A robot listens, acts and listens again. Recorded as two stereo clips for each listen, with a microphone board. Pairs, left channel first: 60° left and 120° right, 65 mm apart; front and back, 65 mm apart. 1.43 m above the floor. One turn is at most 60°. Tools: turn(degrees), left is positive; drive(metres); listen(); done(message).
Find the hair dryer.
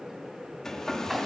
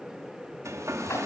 turn(degrees=60)
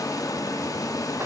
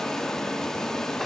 turn(degrees=60)
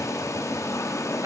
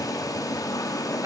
turn(degrees=25)
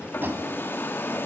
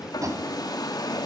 done("Found it: a hair dryer, straight ahead.")